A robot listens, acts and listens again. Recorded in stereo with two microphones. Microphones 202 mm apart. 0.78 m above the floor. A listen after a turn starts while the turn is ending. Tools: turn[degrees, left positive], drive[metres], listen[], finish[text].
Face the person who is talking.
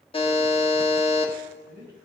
Thought: The man speaking: about 50° right or 130° right.
Action: turn[-50]
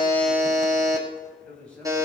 Action: finish[Facing the man speaking, over 4 m away.]